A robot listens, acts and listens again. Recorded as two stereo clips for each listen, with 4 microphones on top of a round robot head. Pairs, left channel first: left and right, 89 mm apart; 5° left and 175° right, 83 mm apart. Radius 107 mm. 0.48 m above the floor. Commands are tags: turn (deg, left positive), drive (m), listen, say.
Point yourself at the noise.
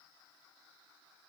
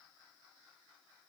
<listen/>
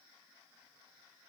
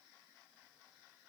<listen/>
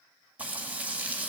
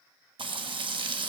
<turn deg="-165"/>
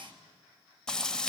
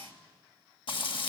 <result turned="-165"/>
<turn deg="10"/>
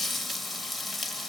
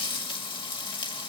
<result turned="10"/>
<say>Facing the frying.</say>